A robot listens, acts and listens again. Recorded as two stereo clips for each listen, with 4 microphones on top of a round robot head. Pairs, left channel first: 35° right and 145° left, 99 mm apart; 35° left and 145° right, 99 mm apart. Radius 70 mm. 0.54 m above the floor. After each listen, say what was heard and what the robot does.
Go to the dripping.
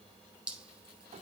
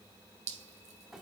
The dripping: 135° right. Turn 135° right.
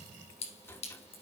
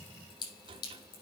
The dripping is now 10° right. Turn 10° right.
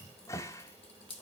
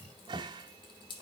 Drive 1.0 m forward.
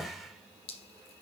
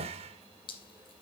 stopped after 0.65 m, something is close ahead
Blocked. The dripping is further on, straight ahead.